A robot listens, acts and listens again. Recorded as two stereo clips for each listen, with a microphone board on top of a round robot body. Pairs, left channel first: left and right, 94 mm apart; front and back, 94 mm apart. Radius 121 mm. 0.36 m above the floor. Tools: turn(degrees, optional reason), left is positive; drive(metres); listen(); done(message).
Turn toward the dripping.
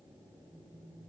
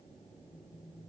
listen()
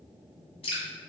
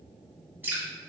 turn(degrees=110, reason="The dripping: 110° left.")
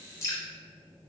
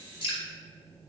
turn(degrees=30, reason="The dripping is now 30° left.")
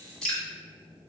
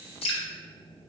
done("Found it: dripping, straight ahead, 1 to 2 m away.")